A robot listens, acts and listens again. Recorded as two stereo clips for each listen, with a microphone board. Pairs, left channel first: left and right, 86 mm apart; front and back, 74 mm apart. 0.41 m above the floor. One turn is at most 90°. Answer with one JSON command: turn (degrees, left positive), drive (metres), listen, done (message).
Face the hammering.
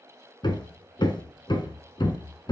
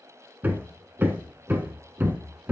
{"turn": 90}
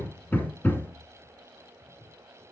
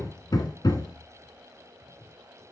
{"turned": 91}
{"turn": 25}
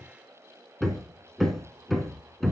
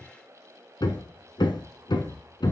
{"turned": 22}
{"done": "Facing the hammering, 1 to 2 m away."}